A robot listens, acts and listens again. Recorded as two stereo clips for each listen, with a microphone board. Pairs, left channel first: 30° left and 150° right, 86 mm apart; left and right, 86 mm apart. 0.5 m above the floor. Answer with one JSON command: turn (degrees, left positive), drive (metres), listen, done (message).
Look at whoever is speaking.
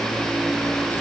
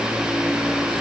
{"listen": true}
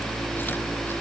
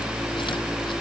{"listen": true}
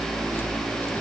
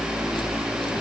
{"done": "I can't make out anyone speaking to turn to."}